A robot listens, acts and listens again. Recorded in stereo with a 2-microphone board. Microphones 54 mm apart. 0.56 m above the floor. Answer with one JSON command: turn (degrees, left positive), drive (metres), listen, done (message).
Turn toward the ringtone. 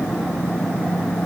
{"listen": true}
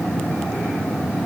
{"listen": true}
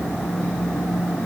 {"done": "I can't make out a ringtone to turn to."}